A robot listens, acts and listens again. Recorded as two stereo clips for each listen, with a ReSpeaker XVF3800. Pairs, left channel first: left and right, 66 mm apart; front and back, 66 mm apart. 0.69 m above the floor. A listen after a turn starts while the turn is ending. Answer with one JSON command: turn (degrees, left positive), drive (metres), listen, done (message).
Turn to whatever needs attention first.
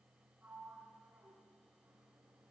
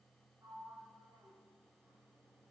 {"listen": true}
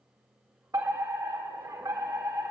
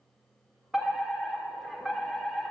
{"turn": -95}
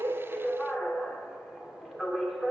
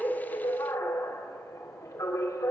{"done": "Facing the fire alarm, 2 to 4 m away."}